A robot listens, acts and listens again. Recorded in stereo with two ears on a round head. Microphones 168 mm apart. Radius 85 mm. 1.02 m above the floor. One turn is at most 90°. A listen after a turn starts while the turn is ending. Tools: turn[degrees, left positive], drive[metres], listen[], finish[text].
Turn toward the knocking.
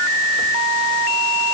Action: listen[]
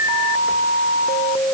Action: listen[]
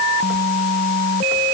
Action: finish[I can't make out knocking to turn to.]